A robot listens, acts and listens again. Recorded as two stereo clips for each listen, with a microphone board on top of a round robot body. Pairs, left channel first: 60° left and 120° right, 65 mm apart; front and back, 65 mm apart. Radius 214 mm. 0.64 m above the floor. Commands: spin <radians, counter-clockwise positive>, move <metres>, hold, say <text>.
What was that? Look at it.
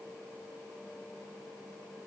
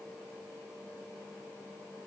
hold
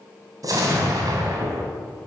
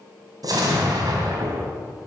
spin -2.62
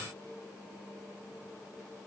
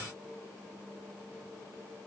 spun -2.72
say Facing where the explosion came from. I can't hear it now.